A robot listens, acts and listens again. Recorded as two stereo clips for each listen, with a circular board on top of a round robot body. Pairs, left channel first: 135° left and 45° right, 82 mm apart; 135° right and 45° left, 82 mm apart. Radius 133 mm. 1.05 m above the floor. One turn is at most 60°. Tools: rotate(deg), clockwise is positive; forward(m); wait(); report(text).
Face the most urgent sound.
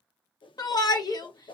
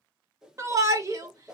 rotate(-60)
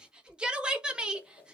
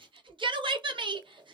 rotate(-35)
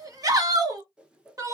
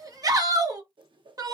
report("Found it: a shout, straight ahead, 1 to 2 m away.")